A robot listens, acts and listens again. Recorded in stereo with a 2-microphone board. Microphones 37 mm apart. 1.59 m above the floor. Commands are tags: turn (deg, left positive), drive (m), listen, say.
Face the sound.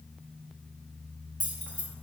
<turn deg="30"/>
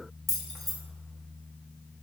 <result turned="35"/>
<say>Found it: keys jangling, straight ahead, under 1 m away.</say>